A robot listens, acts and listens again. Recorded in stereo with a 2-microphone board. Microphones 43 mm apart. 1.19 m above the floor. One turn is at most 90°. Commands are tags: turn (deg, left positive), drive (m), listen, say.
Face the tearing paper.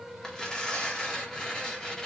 <turn deg="20"/>
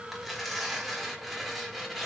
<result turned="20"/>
<say>Facing the tearing paper, 1 to 2 m away.</say>